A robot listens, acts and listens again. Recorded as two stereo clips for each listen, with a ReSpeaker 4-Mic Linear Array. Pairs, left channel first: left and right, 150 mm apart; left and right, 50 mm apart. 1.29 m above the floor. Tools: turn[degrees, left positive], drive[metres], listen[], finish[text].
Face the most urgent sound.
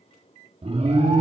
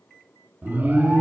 Thought: The alarm: about 45° right or 135° right.
Action: turn[-45]
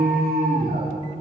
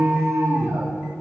Thought: So it is at 90° right.
Action: turn[-90]
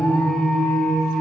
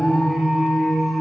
Action: finish[Facing the alarm, 2 to 4 m away.]